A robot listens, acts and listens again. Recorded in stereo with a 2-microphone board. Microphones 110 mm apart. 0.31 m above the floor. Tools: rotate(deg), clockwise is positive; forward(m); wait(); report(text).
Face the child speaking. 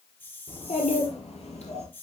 rotate(-90)
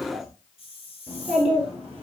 rotate(15)
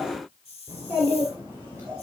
rotate(20)
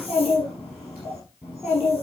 report("Facing the child speaking, 2 to 4 m away.")